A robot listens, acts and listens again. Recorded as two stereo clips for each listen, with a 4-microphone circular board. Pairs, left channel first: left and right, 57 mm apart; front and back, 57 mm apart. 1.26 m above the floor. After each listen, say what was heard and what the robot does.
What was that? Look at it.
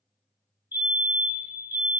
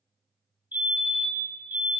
The fire alarm: 130° right. Turn 130° right.
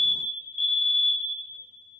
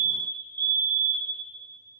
Found it: a fire alarm, straight ahead, 1 to 2 m away.